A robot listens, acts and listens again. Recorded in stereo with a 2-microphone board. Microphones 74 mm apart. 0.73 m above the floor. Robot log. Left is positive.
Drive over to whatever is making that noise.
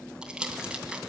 cmd yaw -30
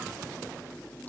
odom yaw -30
cmd idle
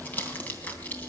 note: So it is at 25° left.
cmd yaw +25
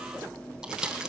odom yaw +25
note: The crumpling is now 10° right.
cmd yaw -10
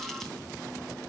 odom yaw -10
cmd idle
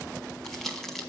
cmd fwd 1.0
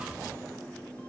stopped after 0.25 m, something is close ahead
cmd idle
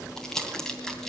end: Blocked. The crumpling is further on, straight ahead.